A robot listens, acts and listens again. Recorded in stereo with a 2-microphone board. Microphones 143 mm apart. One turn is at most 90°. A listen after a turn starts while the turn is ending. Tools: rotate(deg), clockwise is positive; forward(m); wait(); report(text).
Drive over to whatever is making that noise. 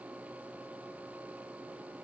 wait()
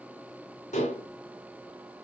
rotate(-55)
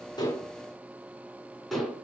forward(1.0)
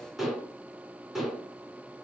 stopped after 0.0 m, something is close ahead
report("Something is in my way. I am facing the dishes clattering but have not reached it.")